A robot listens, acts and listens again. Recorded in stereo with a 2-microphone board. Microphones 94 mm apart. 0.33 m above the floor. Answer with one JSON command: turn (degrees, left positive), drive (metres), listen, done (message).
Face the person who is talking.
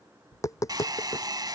{"listen": true}
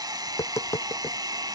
{"listen": true}
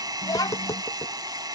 {"turn": 45}
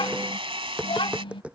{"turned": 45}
{"turn": 85}
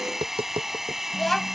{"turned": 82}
{"done": "Found it: a child speaking, straight ahead."}